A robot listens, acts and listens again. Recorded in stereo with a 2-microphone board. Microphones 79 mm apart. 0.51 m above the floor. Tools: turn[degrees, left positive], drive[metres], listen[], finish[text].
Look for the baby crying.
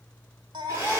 Thought: The baby crying: about 70° right or 110° right.
Action: turn[-70]
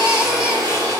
Thought: So it is at 15° right.
Action: turn[-15]
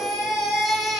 Action: finish[Found it: a baby crying, straight ahead, 1 to 2 m away.]